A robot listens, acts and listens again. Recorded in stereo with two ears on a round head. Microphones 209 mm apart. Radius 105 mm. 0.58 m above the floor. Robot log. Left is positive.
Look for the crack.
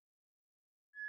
cmd idle
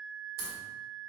note: The crack: about 40° right or 140° right.
cmd yaw -40
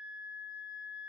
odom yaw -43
cmd idle
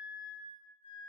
end: I heard a crack, but can't make it out now. It was about straight ahead or 95° right.